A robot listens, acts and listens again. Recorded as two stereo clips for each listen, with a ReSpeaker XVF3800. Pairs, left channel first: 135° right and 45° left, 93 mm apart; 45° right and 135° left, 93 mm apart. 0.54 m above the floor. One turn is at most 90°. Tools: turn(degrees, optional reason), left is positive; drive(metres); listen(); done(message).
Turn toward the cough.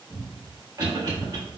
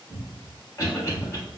done("Facing the cough.")